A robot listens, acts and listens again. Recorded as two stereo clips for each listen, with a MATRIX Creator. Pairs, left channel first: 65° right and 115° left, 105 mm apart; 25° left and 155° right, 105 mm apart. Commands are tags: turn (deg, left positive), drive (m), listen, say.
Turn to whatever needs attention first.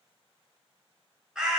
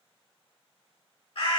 <listen/>
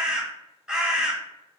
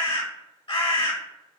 <listen/>
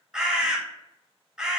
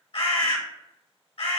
<say>I can't make out anything urgent, only a bird.</say>